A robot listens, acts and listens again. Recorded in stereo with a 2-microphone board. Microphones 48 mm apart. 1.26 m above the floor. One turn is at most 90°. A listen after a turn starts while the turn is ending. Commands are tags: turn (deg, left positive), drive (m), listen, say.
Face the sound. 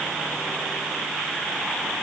<listen/>
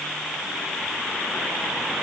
<listen/>
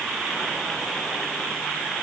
<say>I can't make out anything.</say>